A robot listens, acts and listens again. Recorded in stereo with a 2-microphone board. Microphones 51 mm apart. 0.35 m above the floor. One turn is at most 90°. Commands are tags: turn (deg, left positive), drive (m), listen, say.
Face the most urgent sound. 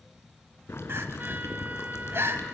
<turn deg="-60"/>
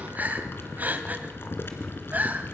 <turn deg="-45"/>
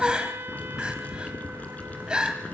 <turn deg="-20"/>
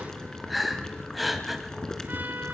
<say>Facing the crying.</say>